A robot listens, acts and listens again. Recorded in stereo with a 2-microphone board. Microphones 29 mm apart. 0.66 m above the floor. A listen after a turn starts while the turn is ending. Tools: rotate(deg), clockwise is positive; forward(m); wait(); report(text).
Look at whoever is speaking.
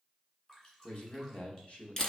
rotate(-50)
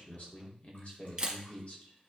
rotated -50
rotate(-65)
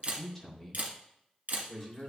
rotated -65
report("Facing the man speaking.")